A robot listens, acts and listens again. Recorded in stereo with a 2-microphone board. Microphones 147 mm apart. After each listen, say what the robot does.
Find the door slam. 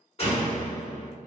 Turn 45° left.
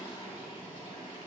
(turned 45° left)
Keep listening.
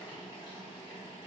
I heard a door slam, but can't make it out now. It was about straight ahead or 90° left.